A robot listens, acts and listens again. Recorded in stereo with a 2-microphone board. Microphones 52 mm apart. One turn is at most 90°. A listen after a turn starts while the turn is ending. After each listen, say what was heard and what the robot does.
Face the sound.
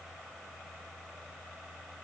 Keep listening.
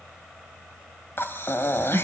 The breathing: about 50° left or 130° left. Turn 50° left.
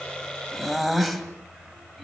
Facing the breathing.